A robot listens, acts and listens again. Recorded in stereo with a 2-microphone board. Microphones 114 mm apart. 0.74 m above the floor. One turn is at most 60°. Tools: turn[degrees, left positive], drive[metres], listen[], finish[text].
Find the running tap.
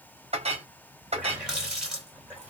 Action: turn[-30]
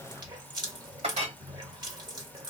Thought: So it is at 140° right.
Action: turn[-60]
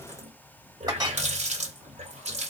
Thought: The running tap is now 100° right.
Action: turn[-60]
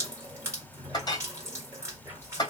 Thought: The running tap is now 25° right.
Action: turn[-25]
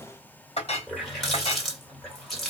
Action: finish[Found it: a running tap, straight ahead, 1 to 2 m away.]